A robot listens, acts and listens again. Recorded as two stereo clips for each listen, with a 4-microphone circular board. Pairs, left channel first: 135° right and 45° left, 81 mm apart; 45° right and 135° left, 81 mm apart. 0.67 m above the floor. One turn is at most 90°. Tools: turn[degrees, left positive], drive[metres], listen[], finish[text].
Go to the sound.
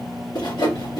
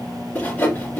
Thought: The sawing: 115° right.
Action: turn[-90]
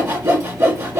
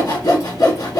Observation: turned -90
Thought: The sawing is now 15° right.
Action: turn[-15]
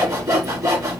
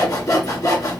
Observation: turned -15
Action: drive[1.0]
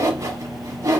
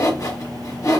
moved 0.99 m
Action: drive[1.0]
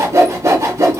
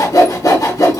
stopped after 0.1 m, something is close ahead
Action: finish[Arrived at the sawing, straight ahead.]